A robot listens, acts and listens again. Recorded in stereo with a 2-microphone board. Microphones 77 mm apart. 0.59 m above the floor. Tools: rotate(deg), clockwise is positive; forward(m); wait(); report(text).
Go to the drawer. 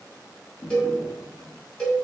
rotate(-65)
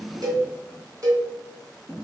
forward(1.0)
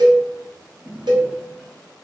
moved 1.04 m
forward(1.0)
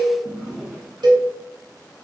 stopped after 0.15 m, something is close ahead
rotate(10)
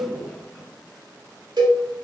report("I am next to the drawer.")